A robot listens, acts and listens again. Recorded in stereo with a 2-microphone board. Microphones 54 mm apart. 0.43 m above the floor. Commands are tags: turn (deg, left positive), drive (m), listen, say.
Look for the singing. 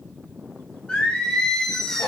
<turn deg="30"/>
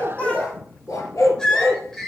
<turn deg="30"/>
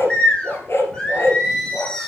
<turn deg="30"/>
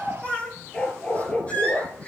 <turn deg="150"/>
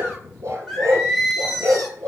<say>Found it: singing, straight ahead.</say>